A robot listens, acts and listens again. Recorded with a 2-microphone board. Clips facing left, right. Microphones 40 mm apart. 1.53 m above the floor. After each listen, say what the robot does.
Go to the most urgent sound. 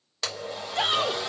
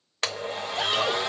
Turn 55° left.
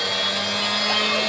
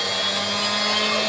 Keep listening.
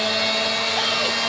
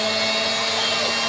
Keep listening.
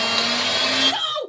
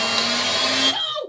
Turn 70° left.
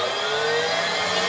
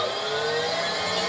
Keep listening.
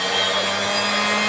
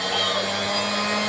Keep listening.
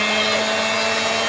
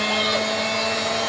Facing where the shout came from. I can't hear it now. I did not reach it.